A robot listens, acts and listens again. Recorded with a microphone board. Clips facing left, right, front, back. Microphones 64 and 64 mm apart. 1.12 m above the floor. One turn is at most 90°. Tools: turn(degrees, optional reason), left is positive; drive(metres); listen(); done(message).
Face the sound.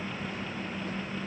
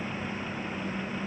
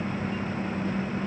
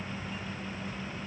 listen()
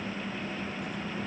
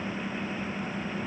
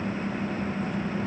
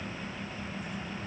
listen()
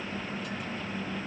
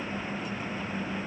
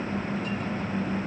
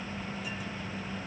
done("I can't make out anything to turn to.")